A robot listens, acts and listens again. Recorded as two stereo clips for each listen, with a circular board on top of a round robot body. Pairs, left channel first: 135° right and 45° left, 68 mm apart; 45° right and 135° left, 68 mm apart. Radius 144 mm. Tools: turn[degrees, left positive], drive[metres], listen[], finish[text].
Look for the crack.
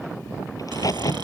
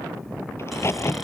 Thought: The crack: 95° right.
Action: turn[-95]
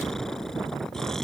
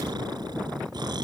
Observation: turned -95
Action: finish[I heard a crack from this way, but can't make it out now.]